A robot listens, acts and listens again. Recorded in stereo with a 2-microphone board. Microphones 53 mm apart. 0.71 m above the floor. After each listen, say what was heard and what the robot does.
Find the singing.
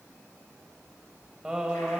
Turn 30° right.
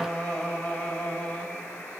So it is at 25° left. Turn 25° left.
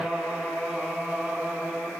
The singing is now 10° right. Turn 10° right.
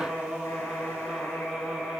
Found it: singing, straight ahead.